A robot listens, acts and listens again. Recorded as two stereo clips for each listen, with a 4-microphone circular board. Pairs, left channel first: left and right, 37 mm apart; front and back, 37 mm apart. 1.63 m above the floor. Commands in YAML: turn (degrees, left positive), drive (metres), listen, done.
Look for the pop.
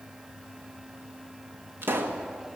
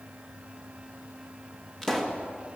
turn: -75
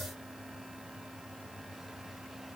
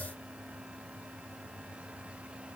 done: "Facing where the pop came from. I can't hear it now."